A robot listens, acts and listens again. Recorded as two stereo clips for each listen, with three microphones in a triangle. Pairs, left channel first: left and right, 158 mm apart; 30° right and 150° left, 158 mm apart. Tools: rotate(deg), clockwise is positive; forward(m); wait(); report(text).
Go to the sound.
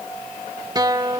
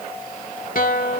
rotate(30)
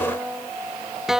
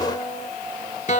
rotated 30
forward(1.0)
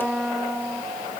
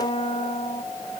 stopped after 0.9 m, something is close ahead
rotate(10)
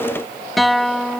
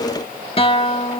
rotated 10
report("I am next to the guitar.")